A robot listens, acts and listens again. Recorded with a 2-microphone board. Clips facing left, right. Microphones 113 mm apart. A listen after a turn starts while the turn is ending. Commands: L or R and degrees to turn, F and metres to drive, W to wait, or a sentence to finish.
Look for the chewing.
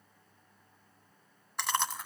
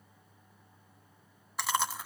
R30
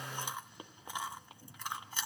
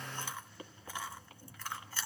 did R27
L20
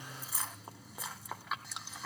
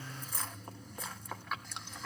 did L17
Found it: chewing, straight ahead.